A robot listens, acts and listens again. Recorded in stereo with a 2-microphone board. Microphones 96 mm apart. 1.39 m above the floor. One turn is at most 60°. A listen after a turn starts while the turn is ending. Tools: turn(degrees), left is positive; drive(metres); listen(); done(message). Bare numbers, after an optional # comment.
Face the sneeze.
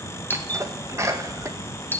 # The sneeze: about 30° right or 150° right.
turn(-30)
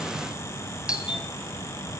listen()
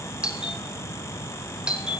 done("I heard a sneeze, but can't make it out now. It was about straight ahead or 120° right.")